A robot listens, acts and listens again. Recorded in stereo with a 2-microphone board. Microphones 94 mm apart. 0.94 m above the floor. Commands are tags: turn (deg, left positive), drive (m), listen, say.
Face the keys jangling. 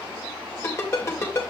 <listen/>
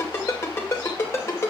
<listen/>
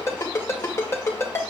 <say>I can't make out keys jangling, only a ringtone.</say>